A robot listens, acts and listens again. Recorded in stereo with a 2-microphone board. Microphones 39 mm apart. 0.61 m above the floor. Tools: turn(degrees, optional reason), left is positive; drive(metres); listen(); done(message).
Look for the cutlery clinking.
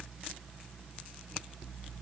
listen()
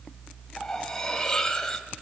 turn(degrees=30)
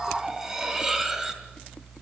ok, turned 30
turn(degrees=-15, reason="So it is at 15° right.")
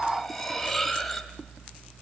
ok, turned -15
done("Facing the cutlery clinking.")